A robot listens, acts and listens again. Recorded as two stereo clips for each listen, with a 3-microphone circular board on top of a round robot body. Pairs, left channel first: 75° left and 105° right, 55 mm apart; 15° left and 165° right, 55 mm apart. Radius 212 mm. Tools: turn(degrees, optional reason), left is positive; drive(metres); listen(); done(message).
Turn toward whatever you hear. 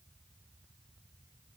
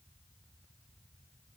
listen()
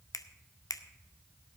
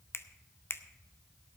turn(degrees=60, reason="The finger snap: 60° left.")
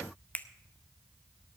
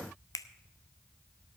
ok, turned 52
turn(degrees=10, reason="The finger snap is now 10° left.")
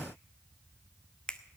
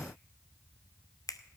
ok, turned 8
done("Facing the finger snap.")